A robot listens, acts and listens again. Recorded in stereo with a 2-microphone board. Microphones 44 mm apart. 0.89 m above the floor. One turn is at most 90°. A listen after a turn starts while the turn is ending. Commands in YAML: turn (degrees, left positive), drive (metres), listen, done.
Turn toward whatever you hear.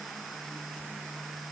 listen: true
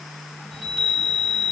turn: 30
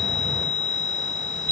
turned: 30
turn: 90
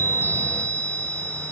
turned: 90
turn: 50
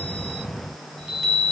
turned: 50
done: "Found it: a chime, straight ahead."